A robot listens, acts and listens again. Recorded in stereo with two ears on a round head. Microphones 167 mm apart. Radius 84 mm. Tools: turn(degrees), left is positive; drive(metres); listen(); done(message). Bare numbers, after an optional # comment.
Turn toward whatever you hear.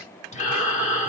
# The breathing: about 40° left or 140° left.
turn(40)
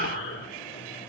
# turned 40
# So it is at 100° left.
turn(100)
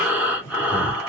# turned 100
done("Facing the breathing.")